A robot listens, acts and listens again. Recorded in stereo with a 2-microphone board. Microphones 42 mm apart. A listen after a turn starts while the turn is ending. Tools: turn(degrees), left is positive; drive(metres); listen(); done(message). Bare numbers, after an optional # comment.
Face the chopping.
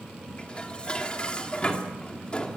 listen()
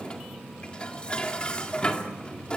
listen()
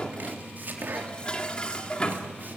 # The chopping: about 50° right or 130° right.
turn(-50)
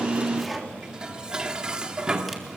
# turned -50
done("Found it: chopping, straight ahead.")